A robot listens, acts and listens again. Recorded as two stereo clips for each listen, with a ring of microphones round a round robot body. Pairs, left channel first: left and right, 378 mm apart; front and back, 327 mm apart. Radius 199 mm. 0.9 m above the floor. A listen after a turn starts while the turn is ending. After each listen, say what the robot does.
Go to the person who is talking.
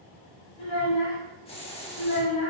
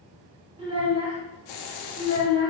Turn 105° left.
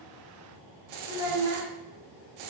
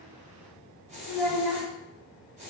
Turn 20° right.
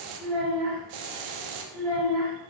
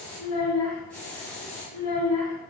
Drive 1.0 m forward.
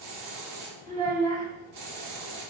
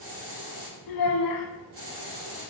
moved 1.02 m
Turn 10° left.
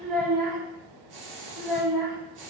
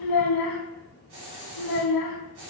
Drive 1.0 m forward.
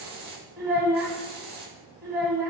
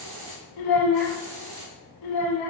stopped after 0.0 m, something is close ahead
Arrived at the child speaking, straight ahead.